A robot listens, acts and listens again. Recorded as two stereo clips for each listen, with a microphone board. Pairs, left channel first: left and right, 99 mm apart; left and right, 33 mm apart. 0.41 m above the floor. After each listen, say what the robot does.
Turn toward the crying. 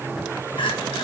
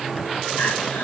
Turn 60° left.
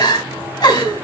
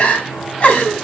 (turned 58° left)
Turn 50° left.
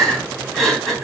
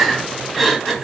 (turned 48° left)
Facing the crying, 2 to 4 m away.